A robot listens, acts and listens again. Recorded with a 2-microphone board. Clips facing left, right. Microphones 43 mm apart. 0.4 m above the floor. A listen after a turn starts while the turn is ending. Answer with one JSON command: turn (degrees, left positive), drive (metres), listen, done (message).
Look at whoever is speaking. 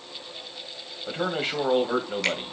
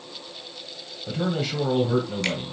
{"turn": 35}
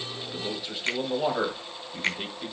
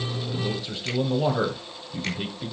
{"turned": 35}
{"done": "Found it: a man speaking, straight ahead."}